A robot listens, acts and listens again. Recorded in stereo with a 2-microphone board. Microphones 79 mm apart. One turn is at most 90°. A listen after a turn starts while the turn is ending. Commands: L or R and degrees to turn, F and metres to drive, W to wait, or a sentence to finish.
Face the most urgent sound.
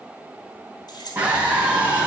R20
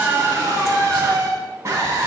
R90
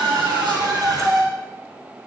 R55
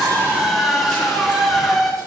Found it: a scream, straight ahead.